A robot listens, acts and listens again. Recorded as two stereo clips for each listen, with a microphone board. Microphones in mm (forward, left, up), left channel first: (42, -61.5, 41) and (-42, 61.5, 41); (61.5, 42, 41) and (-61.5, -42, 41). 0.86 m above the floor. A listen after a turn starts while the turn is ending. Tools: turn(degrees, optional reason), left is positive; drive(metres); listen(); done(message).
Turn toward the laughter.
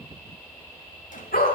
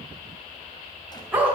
listen()
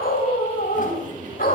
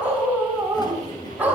turn(degrees=95, reason="The laughter: 95° left.")
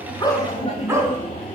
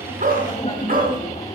done("Found it: laughter, straight ahead.")